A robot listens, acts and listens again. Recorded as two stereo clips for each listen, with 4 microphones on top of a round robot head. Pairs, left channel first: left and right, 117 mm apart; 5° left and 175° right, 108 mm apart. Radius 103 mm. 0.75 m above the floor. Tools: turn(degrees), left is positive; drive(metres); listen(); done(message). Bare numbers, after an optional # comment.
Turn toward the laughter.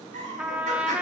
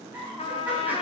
# The laughter: 95° right.
turn(-95)
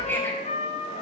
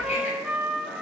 listen()
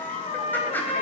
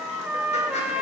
listen()
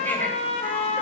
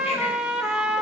done("I heard laughter from this way, but can't make it out now.")